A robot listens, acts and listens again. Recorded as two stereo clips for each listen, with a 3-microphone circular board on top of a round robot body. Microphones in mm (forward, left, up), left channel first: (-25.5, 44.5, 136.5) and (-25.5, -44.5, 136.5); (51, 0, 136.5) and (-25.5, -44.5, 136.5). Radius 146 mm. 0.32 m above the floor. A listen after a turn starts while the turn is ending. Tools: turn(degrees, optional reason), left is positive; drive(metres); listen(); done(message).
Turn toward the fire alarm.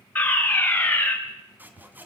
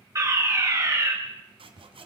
turn(degrees=160, reason="The fire alarm: 160° left.")
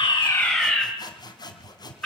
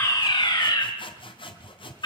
done("Found it: a fire alarm, straight ahead, over 4 m away.")